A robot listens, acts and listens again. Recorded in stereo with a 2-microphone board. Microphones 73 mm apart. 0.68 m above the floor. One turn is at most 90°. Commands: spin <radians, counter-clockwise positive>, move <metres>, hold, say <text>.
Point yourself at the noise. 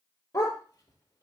spin 0.70
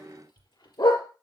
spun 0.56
spin 1.57
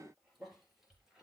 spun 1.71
hold
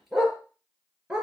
spin -0.17
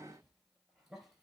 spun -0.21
hold
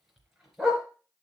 say Facing the dog barking.